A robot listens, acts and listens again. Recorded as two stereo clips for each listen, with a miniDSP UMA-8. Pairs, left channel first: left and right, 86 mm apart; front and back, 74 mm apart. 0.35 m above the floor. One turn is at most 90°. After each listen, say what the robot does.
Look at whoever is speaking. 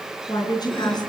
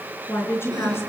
Turn 55° left.
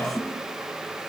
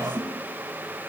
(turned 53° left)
Keep listening.
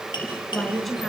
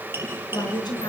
Facing the woman speaking.